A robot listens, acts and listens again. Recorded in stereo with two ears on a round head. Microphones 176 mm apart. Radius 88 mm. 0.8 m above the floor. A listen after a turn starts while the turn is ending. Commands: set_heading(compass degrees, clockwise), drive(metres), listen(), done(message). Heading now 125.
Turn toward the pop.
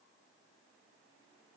listen()
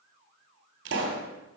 set_heading(185)
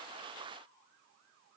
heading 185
listen()
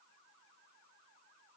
done("I heard a pop, but can't make it out now. It was about straight ahead or 60° right.")